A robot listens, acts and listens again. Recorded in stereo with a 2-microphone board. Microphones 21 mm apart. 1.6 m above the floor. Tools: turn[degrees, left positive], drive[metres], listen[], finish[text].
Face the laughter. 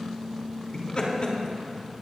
Thought: The laughter: about 50° left or 130° left.
Action: turn[50]
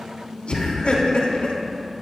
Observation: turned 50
Thought: So it is at 75° left.
Action: turn[75]
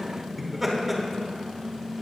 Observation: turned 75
Action: finish[Facing the laughter.]